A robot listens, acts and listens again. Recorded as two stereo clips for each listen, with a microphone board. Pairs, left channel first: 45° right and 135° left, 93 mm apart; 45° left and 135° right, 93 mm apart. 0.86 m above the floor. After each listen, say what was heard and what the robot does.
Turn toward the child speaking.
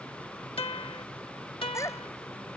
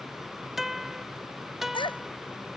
The child speaking: 15° left. Turn 15° left.
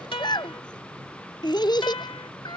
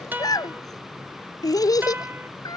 Facing the child speaking.